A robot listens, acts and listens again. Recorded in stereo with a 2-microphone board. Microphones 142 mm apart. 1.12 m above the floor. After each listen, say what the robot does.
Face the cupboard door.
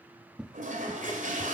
Turn 30° right.
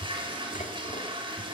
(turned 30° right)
Turn 145° right.
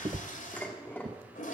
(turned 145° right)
Turn 40° right.
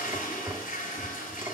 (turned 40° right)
Found it: a cupboard door, straight ahead.